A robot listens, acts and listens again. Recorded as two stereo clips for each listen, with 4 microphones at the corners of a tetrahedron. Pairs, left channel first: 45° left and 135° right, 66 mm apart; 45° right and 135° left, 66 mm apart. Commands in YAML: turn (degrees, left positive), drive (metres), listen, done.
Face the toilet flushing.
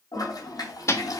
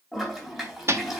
turn: 45
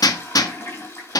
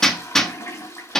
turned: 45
done: "Facing the toilet flushing, 2 to 4 m away."